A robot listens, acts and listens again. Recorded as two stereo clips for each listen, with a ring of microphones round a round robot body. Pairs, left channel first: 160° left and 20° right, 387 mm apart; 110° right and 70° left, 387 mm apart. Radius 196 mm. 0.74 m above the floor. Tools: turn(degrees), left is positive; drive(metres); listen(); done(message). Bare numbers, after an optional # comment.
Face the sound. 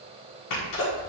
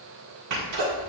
# The sneeze: 115° left.
turn(115)
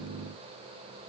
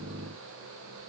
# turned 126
# Nothing new. It was at 10° right.
turn(-10)
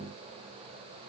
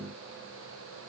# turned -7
done("Facing where the sneeze came from. I can't hear it now.")